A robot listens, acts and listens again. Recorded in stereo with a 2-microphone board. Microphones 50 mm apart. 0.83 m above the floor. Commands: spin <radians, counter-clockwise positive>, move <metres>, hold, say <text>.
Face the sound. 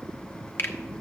spin 0.96
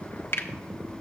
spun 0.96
spin 1.13
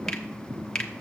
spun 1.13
spin 0.26
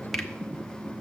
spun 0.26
hold
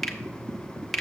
say Found it: a finger snap, straight ahead.